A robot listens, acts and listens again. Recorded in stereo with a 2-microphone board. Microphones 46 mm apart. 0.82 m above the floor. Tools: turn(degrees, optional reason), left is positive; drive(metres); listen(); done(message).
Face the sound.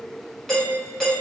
turn(degrees=30)
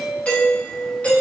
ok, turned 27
turn(degrees=145, reason="So it is at 145° left.")
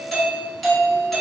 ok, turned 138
done("Found it: a doorbell, straight ahead, 1 to 2 m away.")